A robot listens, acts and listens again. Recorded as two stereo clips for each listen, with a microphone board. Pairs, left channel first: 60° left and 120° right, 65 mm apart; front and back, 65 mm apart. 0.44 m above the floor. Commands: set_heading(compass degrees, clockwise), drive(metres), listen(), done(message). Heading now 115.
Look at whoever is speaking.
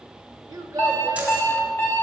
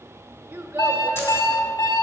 set_heading(245)
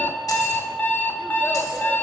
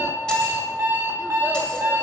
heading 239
listen()
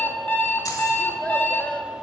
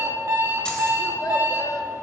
listen()
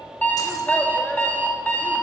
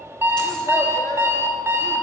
done("I heard a child speaking from this way, but can't make it out now.")